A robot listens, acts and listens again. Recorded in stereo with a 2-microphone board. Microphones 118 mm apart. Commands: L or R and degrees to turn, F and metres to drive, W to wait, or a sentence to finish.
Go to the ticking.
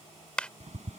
R70
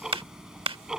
F1.0
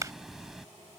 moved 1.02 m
F1.0
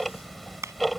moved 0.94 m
F1.0
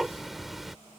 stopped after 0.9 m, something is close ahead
Arrived at the ticking, straight ahead.